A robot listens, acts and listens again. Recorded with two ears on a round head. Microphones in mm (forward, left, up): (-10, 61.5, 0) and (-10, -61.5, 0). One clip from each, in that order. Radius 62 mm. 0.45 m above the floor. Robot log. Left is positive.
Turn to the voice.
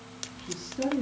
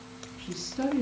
note: The woman speaking: about 70° right or 110° right.
cmd yaw -70
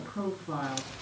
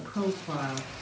note: So it is at 35° right.
cmd yaw -35
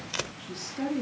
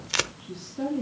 note: The woman speaking is now 30° left.
cmd yaw +30
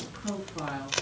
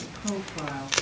end: Found it: a woman speaking, straight ahead.